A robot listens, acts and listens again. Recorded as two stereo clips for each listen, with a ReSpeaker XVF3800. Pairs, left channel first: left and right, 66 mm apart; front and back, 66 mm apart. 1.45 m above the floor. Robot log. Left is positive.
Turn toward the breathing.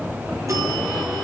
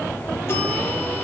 cmd idle
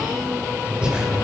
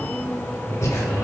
note: The breathing: 20° right.
cmd yaw -20
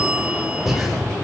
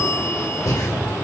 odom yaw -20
end: Facing the breathing, 2 to 4 m away.